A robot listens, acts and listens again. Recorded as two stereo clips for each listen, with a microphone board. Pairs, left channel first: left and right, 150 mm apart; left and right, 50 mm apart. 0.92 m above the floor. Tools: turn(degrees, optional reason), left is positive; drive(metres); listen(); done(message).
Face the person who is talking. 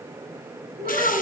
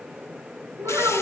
turn(degrees=-75, reason="The child speaking: about 75° right or 105° right.")
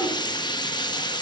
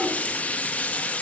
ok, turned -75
listen()
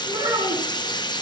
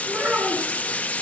turn(degrees=-30, reason="So it is at 30° right.")
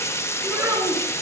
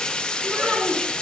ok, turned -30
turn(degrees=-20, reason="The child speaking is now 20° right.")
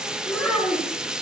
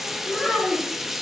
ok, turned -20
done("Facing the child speaking.")